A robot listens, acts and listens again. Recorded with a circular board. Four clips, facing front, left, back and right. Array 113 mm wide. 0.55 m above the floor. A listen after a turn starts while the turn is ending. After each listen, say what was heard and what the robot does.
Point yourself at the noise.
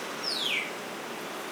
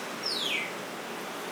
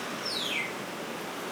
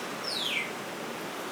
Found it: a bird, straight ahead, over 4 m away.